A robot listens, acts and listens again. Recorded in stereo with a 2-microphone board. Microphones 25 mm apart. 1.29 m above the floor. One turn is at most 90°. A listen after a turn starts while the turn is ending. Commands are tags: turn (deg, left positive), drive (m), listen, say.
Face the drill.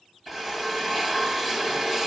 <turn deg="-30"/>
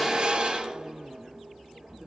<turn deg="-90"/>
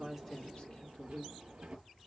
<turn deg="-50"/>
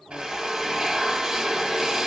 <turn deg="-15"/>
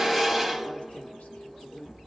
<say>Found it: a drill, straight ahead.</say>